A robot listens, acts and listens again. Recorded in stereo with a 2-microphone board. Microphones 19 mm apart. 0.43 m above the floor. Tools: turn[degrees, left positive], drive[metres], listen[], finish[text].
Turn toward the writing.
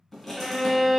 Thought: The writing: about 20° left or 160° left.
Action: turn[20]
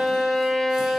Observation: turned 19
Action: listen[]
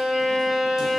Action: listen[]
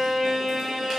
Action: finish[I heard writing, but can't make it out now. It was about straight ahead or 140° left.]